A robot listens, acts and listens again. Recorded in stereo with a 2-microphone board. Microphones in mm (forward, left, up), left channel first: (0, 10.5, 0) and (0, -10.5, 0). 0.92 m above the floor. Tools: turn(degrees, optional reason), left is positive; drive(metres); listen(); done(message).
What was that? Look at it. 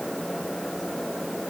listen()
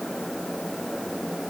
listen()
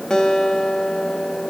turn(degrees=40, reason="The guitar: about 40° left or 140° left.")
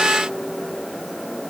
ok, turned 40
listen()
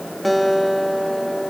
done("Found it: a guitar, straight ahead, 1 to 2 m away.")